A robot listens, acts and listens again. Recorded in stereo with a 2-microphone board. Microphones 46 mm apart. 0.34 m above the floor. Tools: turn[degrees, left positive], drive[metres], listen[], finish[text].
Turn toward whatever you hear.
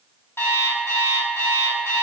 Thought: The alarm clock: about 65° left or 115° left.
Action: turn[65]
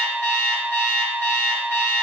Thought: So it is at 40° left.
Action: turn[40]
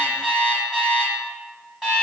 Thought: The alarm clock is now 10° right.
Action: turn[-10]
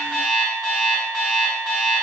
Action: finish[Facing the alarm clock.]